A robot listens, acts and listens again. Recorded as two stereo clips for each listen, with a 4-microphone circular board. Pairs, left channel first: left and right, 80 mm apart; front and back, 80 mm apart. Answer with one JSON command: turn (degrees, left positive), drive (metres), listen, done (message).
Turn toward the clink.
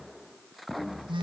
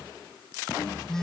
{"listen": true}
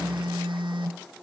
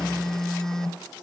{"listen": true}
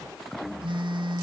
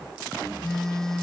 {"done": "I can't make out a clink to turn to."}